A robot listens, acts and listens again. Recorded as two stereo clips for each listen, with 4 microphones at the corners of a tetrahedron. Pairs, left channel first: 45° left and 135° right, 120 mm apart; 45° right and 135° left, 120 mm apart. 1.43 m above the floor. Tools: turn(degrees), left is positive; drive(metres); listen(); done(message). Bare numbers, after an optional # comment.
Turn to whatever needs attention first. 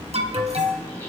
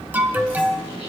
# The alarm: 150° right.
turn(-150)
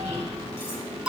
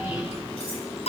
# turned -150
# The alarm is now 55° right.
turn(-55)
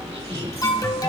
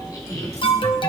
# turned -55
# The alarm is now 10° right.
turn(-10)
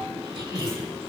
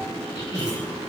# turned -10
listen()
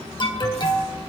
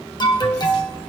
done("Facing the alarm, 1 to 2 m away.")